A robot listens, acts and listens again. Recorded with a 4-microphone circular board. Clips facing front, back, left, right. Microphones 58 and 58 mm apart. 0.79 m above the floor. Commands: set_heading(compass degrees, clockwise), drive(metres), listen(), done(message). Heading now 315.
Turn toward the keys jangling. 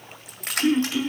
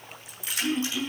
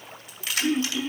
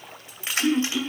set_heading(345)
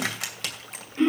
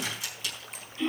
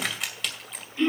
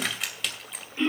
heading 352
done("Found it: keys jangling, straight ahead, 2 to 4 m away.")